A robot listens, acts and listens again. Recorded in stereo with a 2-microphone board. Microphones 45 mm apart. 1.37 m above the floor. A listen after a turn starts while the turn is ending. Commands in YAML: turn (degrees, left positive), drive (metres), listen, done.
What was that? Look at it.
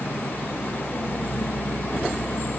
listen: true
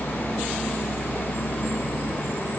listen: true
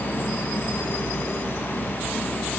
done: "I can't make out anything."